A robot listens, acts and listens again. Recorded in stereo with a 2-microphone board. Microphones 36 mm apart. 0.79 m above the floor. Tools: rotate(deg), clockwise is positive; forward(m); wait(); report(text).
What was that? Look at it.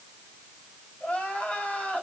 rotate(-40)
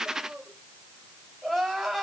report("Facing the crying.")